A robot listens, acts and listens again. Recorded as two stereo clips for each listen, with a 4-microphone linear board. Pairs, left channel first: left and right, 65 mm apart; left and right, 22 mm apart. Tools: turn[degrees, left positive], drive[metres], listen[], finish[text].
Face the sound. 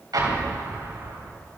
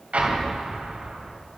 Action: turn[-90]
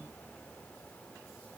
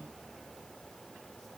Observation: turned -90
Action: finish[I heard an explosion from this way, but can't make it out now.]